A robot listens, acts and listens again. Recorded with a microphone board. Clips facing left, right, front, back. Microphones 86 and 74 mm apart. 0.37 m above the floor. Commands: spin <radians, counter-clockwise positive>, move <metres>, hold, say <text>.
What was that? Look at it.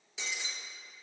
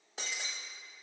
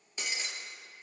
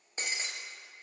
spin -2.18
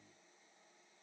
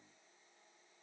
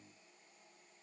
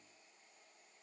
say Facing where the breaking glass came from. I can't hear it now.